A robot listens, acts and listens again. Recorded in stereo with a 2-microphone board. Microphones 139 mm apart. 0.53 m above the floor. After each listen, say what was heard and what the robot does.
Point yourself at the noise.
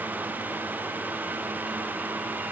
Keep listening.
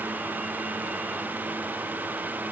Keep listening.
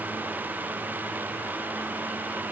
I can't make out anything to turn to.